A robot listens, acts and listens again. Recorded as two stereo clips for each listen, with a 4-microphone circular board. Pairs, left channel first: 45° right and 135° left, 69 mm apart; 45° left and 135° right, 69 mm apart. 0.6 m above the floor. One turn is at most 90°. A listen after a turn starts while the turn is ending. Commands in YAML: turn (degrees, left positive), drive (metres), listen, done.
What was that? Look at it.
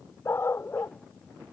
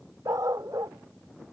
turn: -90
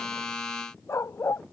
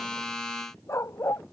done: "Facing the dog barking."